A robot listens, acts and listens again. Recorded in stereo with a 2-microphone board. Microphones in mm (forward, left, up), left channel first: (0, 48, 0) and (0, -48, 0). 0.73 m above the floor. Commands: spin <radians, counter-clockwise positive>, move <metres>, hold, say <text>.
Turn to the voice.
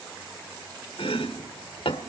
hold
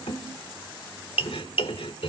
hold
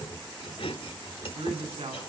spin -1.57
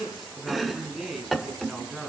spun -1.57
say Facing the man speaking, over 4 m away.